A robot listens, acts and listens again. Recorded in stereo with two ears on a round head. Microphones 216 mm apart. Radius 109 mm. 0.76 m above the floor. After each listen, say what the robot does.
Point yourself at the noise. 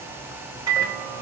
Turn 15° right.
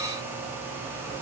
Keep listening.
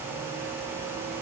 Keep listening.
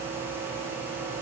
Turn 150° right.
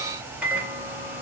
Facing the microwave.